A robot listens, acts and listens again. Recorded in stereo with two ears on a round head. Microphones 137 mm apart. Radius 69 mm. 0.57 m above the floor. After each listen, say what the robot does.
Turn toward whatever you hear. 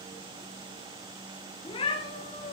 Turn 30° left.
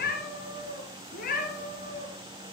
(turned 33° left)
Turn 125° left.
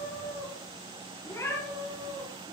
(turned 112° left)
Turn 20° left.
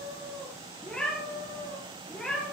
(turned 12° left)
Found it: a cat meowing, straight ahead, over 4 m away.